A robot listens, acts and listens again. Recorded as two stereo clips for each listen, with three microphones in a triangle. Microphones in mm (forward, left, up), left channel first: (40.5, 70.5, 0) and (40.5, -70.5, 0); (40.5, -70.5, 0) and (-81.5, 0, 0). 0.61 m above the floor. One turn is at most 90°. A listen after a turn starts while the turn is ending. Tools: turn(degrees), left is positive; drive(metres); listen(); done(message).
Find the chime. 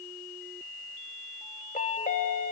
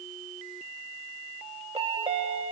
turn(degrees=90)
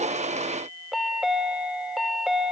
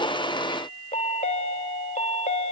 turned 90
done("Facing the chime, under 1 m away.")